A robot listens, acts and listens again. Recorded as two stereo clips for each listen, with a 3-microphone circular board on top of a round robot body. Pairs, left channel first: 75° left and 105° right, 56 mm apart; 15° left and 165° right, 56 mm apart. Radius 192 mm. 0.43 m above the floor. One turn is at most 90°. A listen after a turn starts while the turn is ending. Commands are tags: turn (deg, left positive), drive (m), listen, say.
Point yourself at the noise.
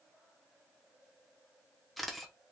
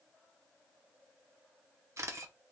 <turn deg="90"/>
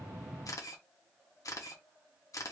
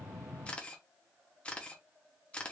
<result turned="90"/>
<turn deg="85"/>
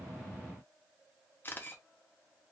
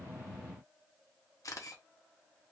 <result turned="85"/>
<turn deg="20"/>
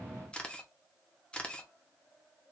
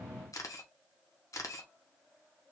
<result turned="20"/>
<say>Found it: a camera shutter, straight ahead.</say>